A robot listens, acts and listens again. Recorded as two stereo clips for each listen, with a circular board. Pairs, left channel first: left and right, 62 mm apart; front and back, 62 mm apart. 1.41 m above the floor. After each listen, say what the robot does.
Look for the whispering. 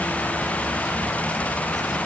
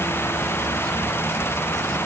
Keep listening.
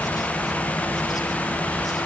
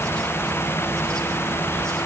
Keep listening.
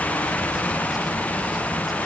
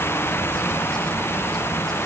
I can't make out whispering to turn to.